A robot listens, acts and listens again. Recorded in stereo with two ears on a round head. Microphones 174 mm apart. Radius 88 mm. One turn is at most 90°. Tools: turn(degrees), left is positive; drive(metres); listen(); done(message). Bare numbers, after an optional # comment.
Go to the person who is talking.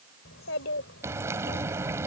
# The child speaking: about 65° left or 115° left.
turn(65)
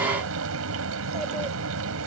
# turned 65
listen()
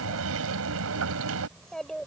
drive(1.0)
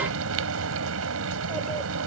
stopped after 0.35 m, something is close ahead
listen()
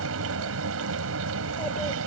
listen()
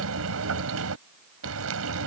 done("Facing where the child speaking came from. I can't hear it now. I did not reach it.")